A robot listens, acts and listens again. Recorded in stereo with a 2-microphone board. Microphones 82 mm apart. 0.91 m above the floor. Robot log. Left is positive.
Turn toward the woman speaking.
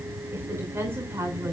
note: The woman speaking: about 30° right or 150° right.
cmd yaw -30
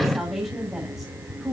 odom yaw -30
end: Facing the woman speaking.